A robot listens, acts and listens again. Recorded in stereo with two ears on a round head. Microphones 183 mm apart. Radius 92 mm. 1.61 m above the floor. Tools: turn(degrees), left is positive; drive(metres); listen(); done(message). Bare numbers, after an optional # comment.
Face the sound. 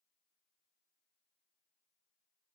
listen()
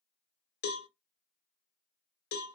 # The cowbell: about 50° left or 130° left.
turn(50)
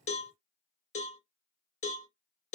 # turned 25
# So it is at 40° left.
turn(40)
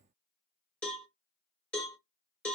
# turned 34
done("Found it: a cowbell, straight ahead.")